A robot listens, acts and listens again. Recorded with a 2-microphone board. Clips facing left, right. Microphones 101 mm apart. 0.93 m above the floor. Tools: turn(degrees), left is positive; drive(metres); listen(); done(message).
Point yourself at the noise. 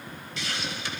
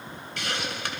turn(degrees=-60)
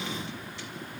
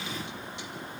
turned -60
listen()
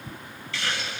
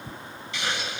turn(degrees=-25)
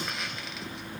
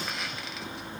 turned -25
listen()
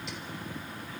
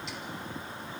listen()
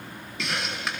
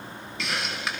done("Facing the hiss, 1 to 2 m away.")